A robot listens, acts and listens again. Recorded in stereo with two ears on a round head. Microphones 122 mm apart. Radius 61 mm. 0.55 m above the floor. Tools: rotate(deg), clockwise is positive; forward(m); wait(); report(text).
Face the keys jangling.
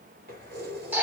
rotate(90)
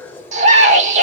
rotate(-15)
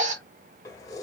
rotate(-25)
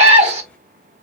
wait()
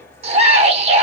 rotate(-20)
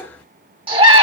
rotate(-10)
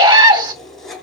report("Facing the keys jangling.")